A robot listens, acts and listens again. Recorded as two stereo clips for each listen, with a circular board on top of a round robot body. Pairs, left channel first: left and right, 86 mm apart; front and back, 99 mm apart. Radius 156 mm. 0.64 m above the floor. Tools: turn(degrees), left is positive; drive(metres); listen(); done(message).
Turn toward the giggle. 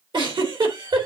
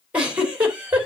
turn(degrees=-105)
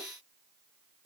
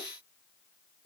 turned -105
done("Facing the giggle, 2 to 4 m away.")